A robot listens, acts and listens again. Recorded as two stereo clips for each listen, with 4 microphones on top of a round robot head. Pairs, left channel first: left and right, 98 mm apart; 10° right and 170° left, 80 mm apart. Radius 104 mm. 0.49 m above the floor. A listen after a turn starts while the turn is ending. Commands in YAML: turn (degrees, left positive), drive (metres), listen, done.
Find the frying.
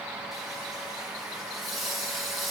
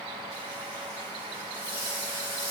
turn: 180
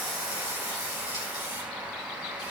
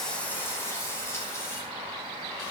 turn: 45
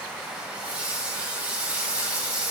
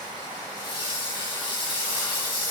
turn: -15
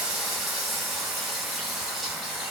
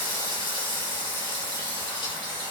done: "Found it: frying, straight ahead."